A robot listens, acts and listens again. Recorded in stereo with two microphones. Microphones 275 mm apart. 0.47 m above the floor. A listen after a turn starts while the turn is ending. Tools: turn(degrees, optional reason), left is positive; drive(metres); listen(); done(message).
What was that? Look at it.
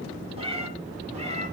turn(degrees=-25, reason="The cat meowing: about 25° right or 155° right.")
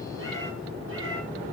turn(degrees=-130, reason="So it is at 130° right.")
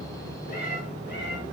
turn(degrees=40, reason="The cat meowing is now 40° left.")
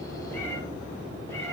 listen()
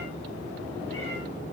listen()
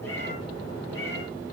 turn(degrees=10, reason="The cat meowing is now 10° left.")
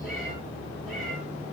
listen()
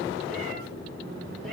listen()
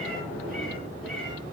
done("I heard a cat meowing from this way, but can't make it out now.")